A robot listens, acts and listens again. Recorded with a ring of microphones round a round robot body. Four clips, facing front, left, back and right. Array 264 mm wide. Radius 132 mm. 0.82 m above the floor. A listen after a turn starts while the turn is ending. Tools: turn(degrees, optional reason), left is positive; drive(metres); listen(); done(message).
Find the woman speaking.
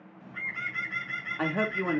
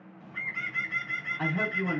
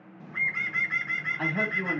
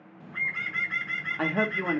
turn(degrees=-80, reason="The woman speaking: 80° right.")
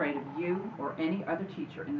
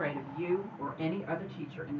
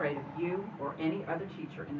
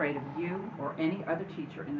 turn(degrees=-60, reason="The woman speaking is now 60° right.")
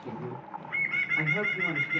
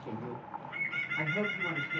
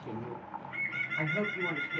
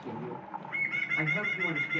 turn(degrees=-15, reason="The woman speaking is now 15° right.")
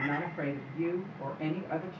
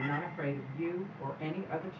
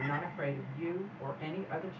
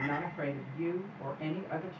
done("Facing the woman speaking, 2 to 4 m away.")